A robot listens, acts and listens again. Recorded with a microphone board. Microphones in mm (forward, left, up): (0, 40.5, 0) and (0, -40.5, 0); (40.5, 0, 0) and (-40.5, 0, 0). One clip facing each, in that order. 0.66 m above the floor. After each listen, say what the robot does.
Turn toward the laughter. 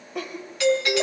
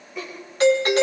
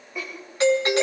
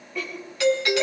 Turn 75° left.
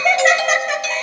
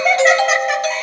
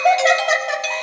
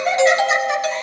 Facing the laughter, over 4 m away.